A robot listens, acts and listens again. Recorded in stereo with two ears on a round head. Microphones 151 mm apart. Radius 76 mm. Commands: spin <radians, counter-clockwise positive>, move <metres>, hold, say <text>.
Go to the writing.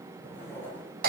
spin 0.52
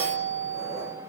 hold
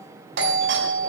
hold
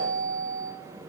say I heard writing, but can't make it out now. It was about 15° right or 135° left. I did not reach it.